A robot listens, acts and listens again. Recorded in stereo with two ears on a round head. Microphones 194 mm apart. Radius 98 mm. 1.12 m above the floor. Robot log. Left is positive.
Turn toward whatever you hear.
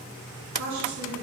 cmd yaw -90
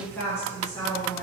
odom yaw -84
note: So it is at 25° left.
cmd yaw +25
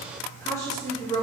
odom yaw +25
note: The woman speaking is now 25° left.
cmd yaw +25
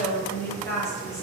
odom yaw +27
note: The woman speaking is now 15° left.
cmd yaw +15
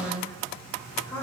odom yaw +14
note: The woman speaking is now 10° left.
cmd yaw +10
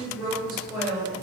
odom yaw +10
end: Found it: a woman speaking, straight ahead, 1 to 2 m away.